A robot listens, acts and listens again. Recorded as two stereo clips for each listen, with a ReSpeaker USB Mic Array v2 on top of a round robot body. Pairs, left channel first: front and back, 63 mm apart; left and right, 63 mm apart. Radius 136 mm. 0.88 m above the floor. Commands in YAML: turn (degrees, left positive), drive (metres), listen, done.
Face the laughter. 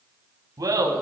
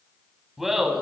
turn: 180
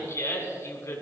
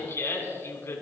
turn: 40
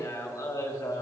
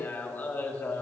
turn: 25
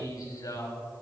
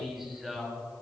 done: "Facing the laughter."